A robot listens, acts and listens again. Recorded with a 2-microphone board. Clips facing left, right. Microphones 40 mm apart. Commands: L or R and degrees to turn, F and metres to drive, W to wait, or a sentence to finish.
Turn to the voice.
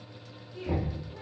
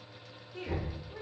R55
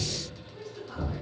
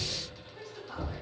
Found it: a woman speaking, straight ahead.